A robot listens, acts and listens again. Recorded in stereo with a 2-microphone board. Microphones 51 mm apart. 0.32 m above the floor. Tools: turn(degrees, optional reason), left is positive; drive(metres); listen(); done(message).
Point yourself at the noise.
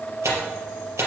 turn(degrees=-70, reason="The tearing paper: about 70° right or 110° right.")
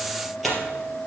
done("Found it: tearing paper, straight ahead.")